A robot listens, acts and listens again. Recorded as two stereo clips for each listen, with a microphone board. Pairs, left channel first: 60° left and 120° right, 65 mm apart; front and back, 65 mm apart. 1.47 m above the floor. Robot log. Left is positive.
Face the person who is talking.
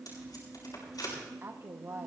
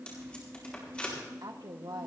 note: The woman speaking: 170° right.
cmd yaw -170
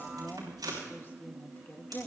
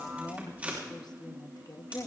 end: Facing the woman speaking, 1 to 2 m away.